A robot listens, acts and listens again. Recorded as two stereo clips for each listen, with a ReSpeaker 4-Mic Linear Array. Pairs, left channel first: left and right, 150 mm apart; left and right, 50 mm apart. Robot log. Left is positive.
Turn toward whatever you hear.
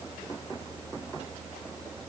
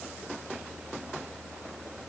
cmd idle
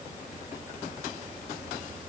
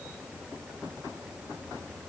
cmd idle
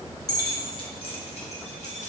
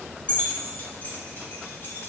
note: The keys jangling: about 55° left or 125° left.
cmd yaw +55
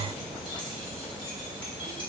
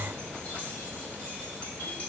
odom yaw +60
cmd idle
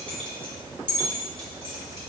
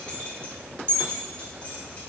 note: So it is at 35° left.
cmd yaw +35
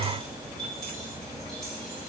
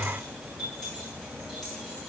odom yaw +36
end: Found it: keys jangling, straight ahead, 1 to 2 m away.